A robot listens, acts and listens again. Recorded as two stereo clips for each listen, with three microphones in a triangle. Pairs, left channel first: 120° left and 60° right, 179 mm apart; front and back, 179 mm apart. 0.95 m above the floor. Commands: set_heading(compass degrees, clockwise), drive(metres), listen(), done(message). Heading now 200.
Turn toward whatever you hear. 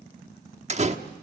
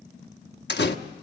set_heading(210)
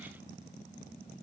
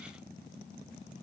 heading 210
done("Facing where the door slam came from. I can't hear it now.")